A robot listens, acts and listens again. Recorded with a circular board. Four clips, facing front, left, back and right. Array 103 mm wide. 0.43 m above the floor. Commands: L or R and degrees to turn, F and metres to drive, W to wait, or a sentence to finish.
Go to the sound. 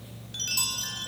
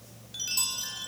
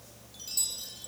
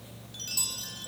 L20
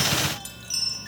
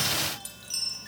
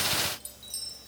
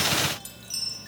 F1.0
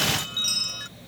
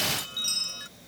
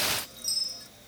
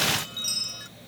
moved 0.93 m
F1.0
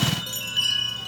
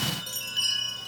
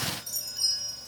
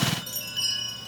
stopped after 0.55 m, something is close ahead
L10
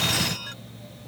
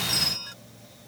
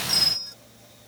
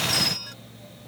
Arrived at the chime, straight ahead.